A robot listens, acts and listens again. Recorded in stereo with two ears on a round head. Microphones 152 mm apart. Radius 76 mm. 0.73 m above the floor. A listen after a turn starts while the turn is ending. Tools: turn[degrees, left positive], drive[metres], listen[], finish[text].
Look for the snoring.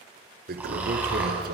Action: turn[-30]
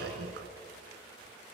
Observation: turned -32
Action: listen[]
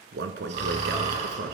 Thought: So it is at 135° right.
Action: turn[-135]
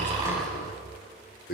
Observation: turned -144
Thought: Nothing new. It was at 10° left.
Action: turn[10]
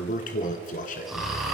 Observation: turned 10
Action: finish[Facing the snoring, over 4 m away.]